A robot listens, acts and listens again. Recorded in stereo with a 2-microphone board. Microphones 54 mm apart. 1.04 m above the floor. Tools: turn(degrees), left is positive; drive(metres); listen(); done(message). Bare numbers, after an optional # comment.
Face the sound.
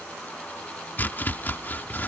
# The chopping: about 40° left or 140° left.
turn(40)
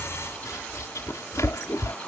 # So it is at 100° left.
turn(100)
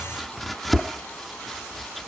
done("Found it: chopping, straight ahead.")